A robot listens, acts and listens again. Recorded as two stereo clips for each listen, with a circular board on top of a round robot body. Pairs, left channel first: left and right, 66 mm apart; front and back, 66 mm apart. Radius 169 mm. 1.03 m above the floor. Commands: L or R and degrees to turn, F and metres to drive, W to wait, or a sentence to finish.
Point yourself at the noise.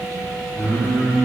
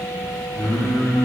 L25
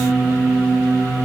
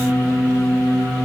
L10
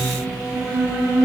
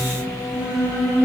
R15
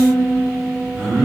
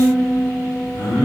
R10
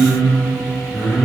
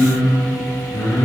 Facing the singing.